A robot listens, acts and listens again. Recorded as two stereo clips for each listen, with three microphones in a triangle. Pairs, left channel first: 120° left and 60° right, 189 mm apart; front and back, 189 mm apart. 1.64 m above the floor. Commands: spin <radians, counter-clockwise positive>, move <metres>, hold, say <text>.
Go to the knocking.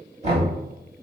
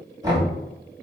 spin -1.92
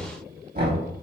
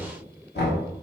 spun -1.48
spin -0.44
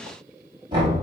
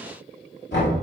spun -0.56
move 1.0
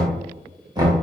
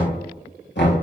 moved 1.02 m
spin 0.17
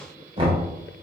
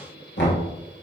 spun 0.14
move 1.0
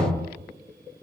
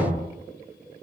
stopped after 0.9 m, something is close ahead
say I am next to the knocking.